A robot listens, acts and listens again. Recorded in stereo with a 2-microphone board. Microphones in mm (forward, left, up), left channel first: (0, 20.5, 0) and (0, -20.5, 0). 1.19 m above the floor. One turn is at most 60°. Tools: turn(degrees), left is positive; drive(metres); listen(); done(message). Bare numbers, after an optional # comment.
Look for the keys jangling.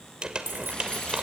# The keys jangling: about 75° right or 105° right.
turn(-60)
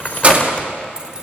# So it is at 30° right.
turn(-30)
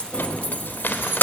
# The keys jangling is now 55° left.
turn(55)
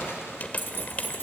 listen()
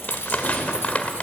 listen()
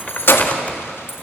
# The keys jangling is now 70° left.
turn(60)
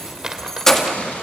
# The keys jangling is now 15° left.
turn(15)
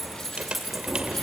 done("Facing the keys jangling.")